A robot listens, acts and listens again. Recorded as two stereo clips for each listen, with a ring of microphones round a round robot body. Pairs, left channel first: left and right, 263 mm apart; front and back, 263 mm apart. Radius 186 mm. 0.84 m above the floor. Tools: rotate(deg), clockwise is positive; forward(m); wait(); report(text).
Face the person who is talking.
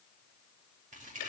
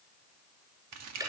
wait()
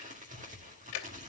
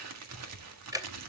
wait()
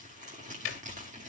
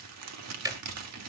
report("I can't make out anyone speaking, only ticking and crumpling.")